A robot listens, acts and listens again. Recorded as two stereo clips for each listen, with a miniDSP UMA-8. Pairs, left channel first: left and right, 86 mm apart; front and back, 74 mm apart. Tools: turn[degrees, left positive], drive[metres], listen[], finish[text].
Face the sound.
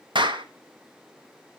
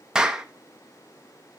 Thought: The clap: 100° right.
Action: turn[-100]
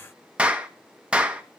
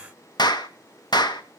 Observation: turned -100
Thought: The clap is now 15° right.
Action: turn[-15]
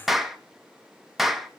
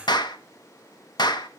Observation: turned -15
Action: finish[Facing the clap, 1 to 2 m away.]